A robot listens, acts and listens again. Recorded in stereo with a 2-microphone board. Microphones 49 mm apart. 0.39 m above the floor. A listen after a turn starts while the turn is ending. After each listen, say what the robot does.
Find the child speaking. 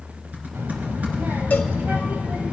Turn 35° right.
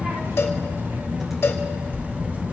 Turn 135° right.
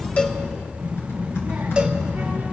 Turn 20° right.
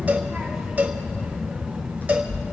Found it: a child speaking, straight ahead.